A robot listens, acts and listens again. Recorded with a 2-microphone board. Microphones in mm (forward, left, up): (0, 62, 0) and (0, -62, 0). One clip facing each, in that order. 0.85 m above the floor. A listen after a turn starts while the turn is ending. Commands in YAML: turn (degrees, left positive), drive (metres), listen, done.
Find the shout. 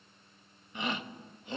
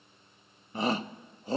turn: -40
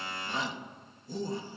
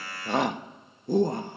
turn: -95
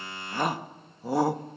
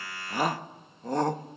turn: 10
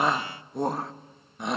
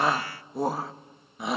done: "Found it: a shout, straight ahead."